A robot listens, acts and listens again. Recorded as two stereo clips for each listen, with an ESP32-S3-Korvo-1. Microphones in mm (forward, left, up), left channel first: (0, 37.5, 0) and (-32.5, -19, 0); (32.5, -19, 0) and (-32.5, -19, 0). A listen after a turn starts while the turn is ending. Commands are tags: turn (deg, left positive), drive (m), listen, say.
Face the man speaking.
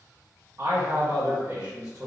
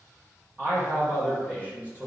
<turn deg="-125"/>
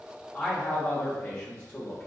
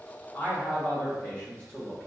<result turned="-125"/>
<turn deg="50"/>
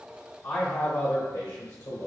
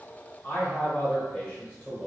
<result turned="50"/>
<turn deg="75"/>
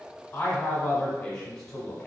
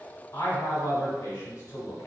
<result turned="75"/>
<turn deg="-15"/>
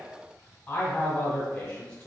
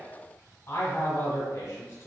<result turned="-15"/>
<say>Facing the man speaking.</say>